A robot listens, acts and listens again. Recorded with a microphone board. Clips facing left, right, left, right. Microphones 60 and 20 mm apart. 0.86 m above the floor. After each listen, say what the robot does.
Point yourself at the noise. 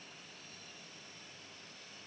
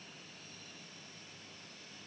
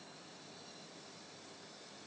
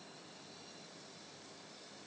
Keep listening.
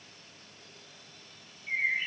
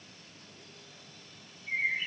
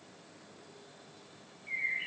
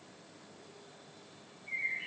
Turn 30° left.
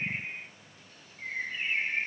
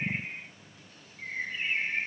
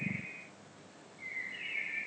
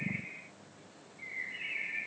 Found it: a bird, straight ahead, 2 to 4 m away.